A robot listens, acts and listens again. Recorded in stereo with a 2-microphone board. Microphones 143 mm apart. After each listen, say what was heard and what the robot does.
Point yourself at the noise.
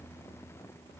Keep listening.
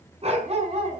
The dog barking: about 45° right or 135° right. Turn 45° right.
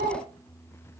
So it is at 100° right. Turn 100° right.
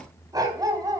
The dog barking is now 25° right. Turn 25° right.
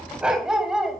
Facing the dog barking, 2 to 4 m away.